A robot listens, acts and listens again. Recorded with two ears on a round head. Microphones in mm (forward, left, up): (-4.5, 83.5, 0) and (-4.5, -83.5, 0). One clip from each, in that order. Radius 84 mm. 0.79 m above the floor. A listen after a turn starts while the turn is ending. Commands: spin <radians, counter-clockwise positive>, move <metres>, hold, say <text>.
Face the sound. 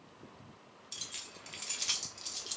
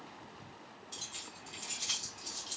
spin 0.79
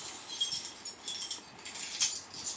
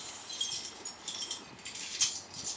say Found it: keys jangling, straight ahead.